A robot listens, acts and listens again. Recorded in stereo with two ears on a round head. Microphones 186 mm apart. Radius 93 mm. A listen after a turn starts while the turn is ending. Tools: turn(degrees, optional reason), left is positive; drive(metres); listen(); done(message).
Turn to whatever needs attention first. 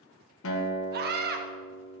turn(degrees=-50, reason="The scream: about 50° right or 130° right.")
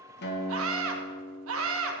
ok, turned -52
turn(degrees=-75, reason="So it is at 75° right.")
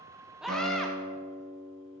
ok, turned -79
listen()
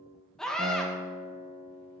done("Facing the scream.")